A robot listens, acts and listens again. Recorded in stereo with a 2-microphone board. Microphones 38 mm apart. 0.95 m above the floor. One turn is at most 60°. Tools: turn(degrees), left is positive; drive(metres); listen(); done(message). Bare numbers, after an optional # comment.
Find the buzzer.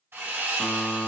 # The buzzer: about 40° left or 140° left.
turn(40)
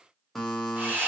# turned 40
done("Found it: a buzzer, straight ahead.")